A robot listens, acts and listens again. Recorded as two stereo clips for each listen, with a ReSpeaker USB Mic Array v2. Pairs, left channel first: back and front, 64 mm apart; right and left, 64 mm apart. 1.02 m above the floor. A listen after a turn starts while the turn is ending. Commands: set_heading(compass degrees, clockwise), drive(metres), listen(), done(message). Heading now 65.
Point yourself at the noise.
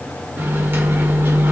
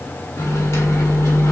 set_heading(115)
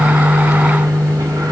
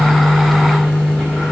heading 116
done("Found it: a microwave, straight ahead, 1 to 2 m away.")